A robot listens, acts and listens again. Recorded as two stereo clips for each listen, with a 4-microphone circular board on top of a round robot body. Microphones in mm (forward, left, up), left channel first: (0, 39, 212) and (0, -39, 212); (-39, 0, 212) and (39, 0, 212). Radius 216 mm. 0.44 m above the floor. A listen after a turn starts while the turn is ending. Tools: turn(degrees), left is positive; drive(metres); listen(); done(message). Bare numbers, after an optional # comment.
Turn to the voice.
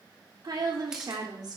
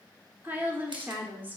# The woman speaking: 65° right.
turn(-65)
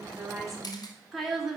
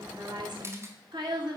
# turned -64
done("Facing the woman speaking.")